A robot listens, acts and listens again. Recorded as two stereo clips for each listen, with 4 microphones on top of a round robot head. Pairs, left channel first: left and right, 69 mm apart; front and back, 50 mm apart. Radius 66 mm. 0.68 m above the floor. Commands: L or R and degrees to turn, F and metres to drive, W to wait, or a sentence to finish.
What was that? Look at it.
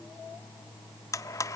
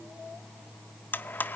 L50
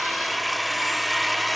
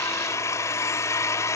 Found it: a blender, straight ahead, 1 to 2 m away.